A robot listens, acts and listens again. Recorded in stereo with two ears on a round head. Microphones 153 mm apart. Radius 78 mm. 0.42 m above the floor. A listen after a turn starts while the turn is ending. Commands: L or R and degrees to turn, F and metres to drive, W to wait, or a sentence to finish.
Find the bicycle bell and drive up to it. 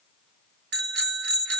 R70
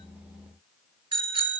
R30
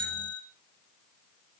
R15
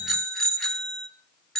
F1.0
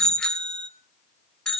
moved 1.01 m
F1.0
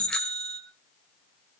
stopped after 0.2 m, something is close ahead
I am next to the bicycle bell.